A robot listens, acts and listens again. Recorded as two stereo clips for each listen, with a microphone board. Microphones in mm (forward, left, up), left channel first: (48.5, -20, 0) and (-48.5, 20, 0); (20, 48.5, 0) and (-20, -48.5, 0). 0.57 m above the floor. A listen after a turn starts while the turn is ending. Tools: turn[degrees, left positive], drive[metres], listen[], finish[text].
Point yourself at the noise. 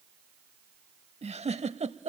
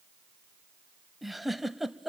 Thought: The giggle: 160° left.
Action: turn[160]
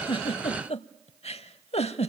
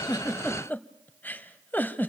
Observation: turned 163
Action: finish[Facing the giggle, under 1 m away.]